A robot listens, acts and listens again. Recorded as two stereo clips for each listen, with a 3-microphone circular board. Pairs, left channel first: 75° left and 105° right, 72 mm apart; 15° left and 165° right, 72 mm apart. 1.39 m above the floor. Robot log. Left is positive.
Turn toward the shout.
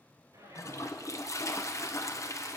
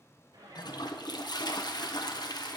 note: The shout: 155° right.
cmd yaw -155
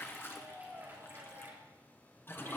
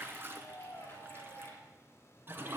note: The shout is now 50° right.
cmd yaw -50
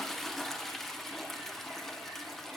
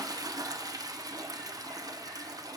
cmd idle
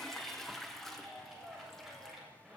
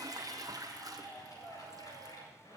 note: The shout is now 20° right.
cmd yaw -20
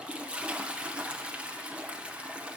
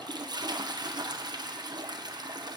cmd idle
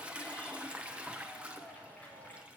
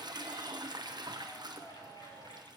end: Found it: a shout, straight ahead, over 4 m away.